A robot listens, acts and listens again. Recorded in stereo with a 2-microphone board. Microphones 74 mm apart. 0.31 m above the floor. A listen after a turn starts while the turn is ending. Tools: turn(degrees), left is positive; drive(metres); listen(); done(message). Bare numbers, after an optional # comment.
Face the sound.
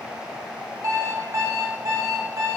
# The alarm clock: about 45° right or 135° right.
turn(-45)
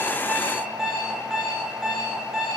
# So it is at 10° right.
turn(-10)
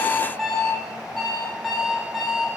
done("Facing the alarm clock, under 1 m away.")